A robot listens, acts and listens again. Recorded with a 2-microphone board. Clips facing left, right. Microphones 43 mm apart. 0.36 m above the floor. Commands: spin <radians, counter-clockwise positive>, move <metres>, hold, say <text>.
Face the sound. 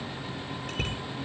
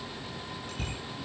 spin 0.96
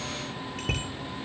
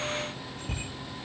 spin 1.13
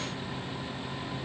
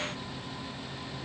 hold
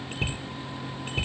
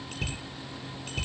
spin 0.35
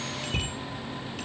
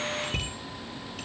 say Facing the bicycle bell, over 4 m away.